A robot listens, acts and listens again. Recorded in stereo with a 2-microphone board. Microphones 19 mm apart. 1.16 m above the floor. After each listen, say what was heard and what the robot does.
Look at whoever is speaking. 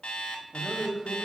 The man speaking: about 65° right or 115° right. Turn 65° right.
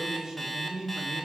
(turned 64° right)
So it is at 50° right. Turn 50° right.
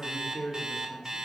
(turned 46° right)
Found it: a man speaking, straight ahead.